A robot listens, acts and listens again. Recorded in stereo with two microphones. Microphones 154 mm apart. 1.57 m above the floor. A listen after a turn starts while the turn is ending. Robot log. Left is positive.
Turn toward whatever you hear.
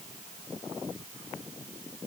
cmd idle
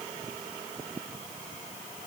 cmd idle
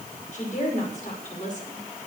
note: The woman speaking: about 55° left or 125° left.
cmd yaw +55
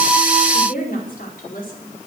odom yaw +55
note: So it is at 70° left.
cmd yaw +70
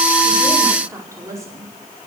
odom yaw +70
note: The woman speaking is now 20° right.
cmd yaw -20
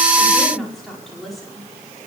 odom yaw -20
end: Found it: a woman speaking, straight ahead, over 4 m away.